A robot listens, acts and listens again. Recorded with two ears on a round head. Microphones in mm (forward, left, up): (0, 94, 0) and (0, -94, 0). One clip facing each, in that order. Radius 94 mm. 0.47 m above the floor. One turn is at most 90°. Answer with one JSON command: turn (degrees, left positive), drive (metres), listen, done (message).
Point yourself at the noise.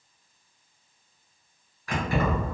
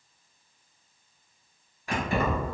{"turn": -20}
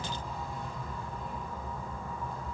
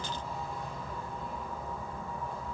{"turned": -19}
{"done": "Found it: keys jangling, straight ahead, 1 to 2 m away."}